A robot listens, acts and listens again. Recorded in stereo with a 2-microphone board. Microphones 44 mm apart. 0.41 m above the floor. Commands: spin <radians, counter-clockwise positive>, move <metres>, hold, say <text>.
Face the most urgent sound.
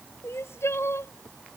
spin 1.57
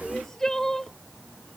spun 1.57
spin 0.17
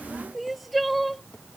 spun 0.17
say Found it: crying, straight ahead.